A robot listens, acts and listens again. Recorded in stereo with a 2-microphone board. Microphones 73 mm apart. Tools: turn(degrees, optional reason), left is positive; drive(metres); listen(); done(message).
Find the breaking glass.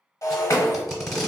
turn(degrees=45, reason="The breaking glass: about 45° left or 135° left.")
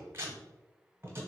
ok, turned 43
listen()
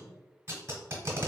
done("I heard breaking glass, but can't make it out now. It was about straight ahead or 90° left.")